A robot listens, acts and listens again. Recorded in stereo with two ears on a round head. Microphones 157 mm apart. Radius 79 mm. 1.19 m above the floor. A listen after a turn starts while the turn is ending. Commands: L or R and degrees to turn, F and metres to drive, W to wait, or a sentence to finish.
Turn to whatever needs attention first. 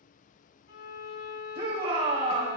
R40
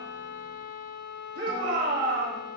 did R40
R100
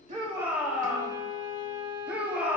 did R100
R10
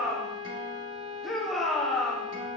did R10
Facing the shout.